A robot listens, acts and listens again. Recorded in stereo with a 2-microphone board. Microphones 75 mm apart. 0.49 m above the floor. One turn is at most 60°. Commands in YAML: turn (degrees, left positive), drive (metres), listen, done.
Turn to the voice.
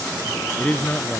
turn: 20
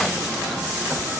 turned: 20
listen: true
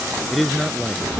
done: "Found it: a man speaking, straight ahead."